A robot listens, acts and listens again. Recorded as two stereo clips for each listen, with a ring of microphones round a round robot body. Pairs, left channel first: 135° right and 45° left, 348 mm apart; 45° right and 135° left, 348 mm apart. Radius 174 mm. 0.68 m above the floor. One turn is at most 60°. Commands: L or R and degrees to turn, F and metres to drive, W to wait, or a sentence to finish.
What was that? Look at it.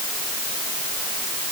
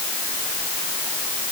W
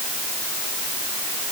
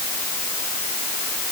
W
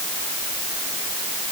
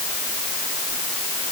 I can't make out anything.